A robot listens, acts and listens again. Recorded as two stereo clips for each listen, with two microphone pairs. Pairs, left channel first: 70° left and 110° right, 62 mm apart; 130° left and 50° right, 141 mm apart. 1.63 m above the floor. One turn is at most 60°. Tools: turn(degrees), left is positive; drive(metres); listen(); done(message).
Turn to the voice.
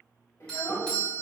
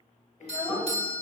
turn(degrees=60)
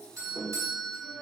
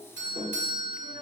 turn(degrees=45)
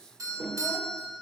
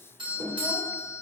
listen()
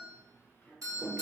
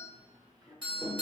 listen()
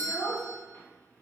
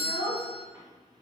turn(degrees=15)
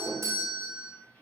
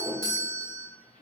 listen()
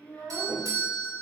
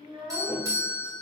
done("Facing the child speaking.")